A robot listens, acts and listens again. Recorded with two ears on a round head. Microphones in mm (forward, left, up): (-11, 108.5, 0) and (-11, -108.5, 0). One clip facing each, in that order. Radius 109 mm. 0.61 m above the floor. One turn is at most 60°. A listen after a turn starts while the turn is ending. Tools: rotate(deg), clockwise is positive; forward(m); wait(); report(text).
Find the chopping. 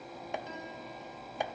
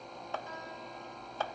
rotate(-30)
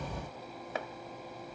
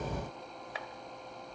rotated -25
rotate(-60)
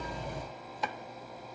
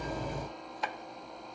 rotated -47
rotate(-60)
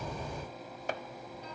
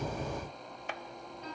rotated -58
rotate(-35)
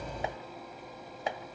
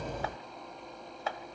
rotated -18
rotate(-15)
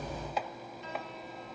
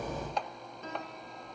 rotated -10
report("Found it: chopping, straight ahead, 1 to 2 m away.")